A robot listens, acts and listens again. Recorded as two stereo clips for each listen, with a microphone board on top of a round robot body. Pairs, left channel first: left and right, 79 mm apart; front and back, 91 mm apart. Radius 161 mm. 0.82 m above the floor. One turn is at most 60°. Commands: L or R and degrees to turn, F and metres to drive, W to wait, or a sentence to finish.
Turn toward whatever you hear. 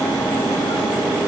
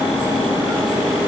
W
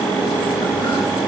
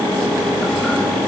W
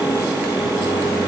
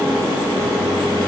I can't make out anything.